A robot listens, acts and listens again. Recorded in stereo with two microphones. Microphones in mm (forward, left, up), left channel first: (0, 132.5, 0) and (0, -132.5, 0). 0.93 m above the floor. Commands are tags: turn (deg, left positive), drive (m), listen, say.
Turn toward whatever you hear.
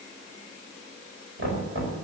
<turn deg="-50"/>
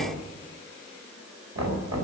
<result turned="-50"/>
<turn deg="-80"/>
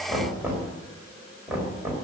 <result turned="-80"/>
<say>Found it: knocking, straight ahead, over 4 m away.</say>